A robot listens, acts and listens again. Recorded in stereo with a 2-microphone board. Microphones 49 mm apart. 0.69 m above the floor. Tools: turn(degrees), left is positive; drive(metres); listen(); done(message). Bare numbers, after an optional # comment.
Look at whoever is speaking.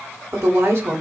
# The woman speaking: about 65° right or 115° right.
turn(-65)
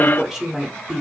# So it is at 10° right.
turn(-10)
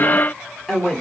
done("Found it: a woman speaking, straight ahead, 1 to 2 m away.")